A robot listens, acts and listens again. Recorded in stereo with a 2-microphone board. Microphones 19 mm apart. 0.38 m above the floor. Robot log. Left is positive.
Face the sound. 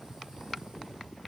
cmd idle
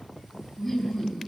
cmd yaw +30
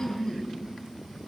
note: So it is at 150° left.
cmd yaw +150
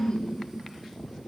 note: The laughter is now 60° left.
cmd yaw +60
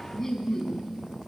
note: The laughter is now 20° left.
cmd yaw +20
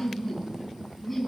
end: Facing the laughter, 2 to 4 m away.